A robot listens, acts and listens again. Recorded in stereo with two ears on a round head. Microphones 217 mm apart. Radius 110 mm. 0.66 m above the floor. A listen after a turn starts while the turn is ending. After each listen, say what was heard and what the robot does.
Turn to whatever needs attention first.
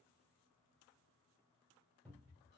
Keep listening.
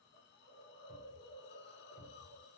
Keep listening.
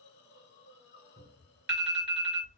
The alarm: about 45° right or 135° right. Turn 45° right.
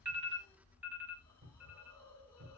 So it is at 10° right. Turn 10° right.
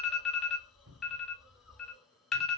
Found it: an alarm, straight ahead.